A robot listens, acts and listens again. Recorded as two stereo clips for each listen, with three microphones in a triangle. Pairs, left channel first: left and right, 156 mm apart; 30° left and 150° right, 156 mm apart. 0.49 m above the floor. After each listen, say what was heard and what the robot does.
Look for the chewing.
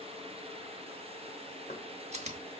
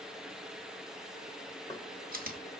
The chewing: 135° right. Turn 135° right.
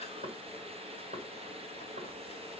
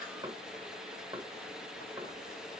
Keep listening.
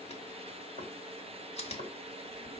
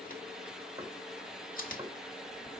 The chewing is now 45° left. Turn 45° left.
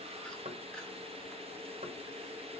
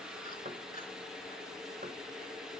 Keep listening.
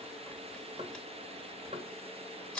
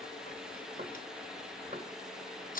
Facing the chewing.